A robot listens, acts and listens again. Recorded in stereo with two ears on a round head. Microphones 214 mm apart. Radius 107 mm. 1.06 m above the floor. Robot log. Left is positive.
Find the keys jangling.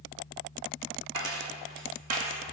cmd yaw -90
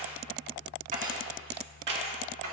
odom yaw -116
note: So it is at 55° right.
cmd yaw -55
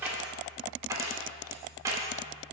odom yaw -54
note: The keys jangling is now 15° right.
cmd yaw -15
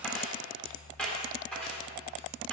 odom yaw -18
end: Found it: keys jangling, straight ahead.